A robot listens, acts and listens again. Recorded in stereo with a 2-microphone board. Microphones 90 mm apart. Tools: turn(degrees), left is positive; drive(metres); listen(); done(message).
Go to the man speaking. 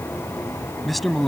turn(degrees=30)
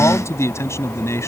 turn(degrees=150)
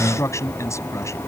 turn(degrees=30)
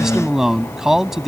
drive(metres=1.0)
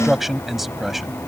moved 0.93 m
drive(metres=1.0)
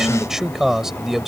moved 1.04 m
drive(metres=1.0)
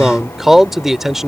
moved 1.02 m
drive(metres=1.0)
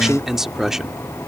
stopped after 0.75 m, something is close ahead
done("I am next to the man speaking.")